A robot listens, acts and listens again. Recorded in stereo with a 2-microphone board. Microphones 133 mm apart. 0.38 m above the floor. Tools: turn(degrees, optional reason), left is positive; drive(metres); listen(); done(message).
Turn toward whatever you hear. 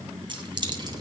turn(degrees=-35, reason="The keys jangling: about 35° right or 145° right.")
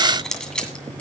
done("Facing the keys jangling, 2 to 4 m away.")